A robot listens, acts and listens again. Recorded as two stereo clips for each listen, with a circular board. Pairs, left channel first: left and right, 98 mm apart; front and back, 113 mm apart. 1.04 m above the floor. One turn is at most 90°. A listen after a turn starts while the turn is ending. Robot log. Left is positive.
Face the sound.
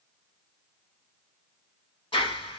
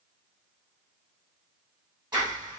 note: The clap: 125° left.
cmd yaw +90
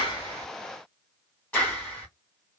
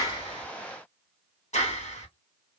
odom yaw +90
note: The clap is now 20° left.
cmd yaw +20
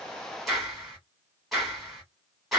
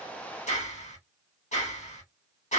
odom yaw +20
end: Found it: a clap, straight ahead, 2 to 4 m away.